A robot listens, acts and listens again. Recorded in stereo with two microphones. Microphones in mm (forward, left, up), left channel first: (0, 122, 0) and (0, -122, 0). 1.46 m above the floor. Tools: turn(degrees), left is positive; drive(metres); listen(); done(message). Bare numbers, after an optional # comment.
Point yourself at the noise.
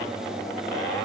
listen()
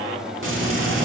# The frying: about 55° right or 125° right.
turn(-55)
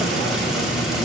done("Facing the frying.")